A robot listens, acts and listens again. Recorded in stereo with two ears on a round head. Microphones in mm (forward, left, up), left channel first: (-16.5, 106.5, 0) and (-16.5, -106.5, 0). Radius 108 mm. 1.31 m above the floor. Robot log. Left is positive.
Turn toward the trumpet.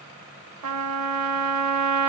cmd yaw -90
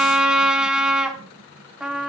end: Found it: a trumpet, straight ahead.